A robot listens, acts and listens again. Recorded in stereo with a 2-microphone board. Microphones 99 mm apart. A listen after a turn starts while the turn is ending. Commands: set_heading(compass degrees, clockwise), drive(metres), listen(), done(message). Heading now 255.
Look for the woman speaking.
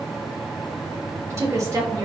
set_heading(290)
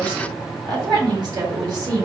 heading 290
set_heading(330)
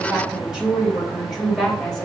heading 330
done("Facing the woman speaking.")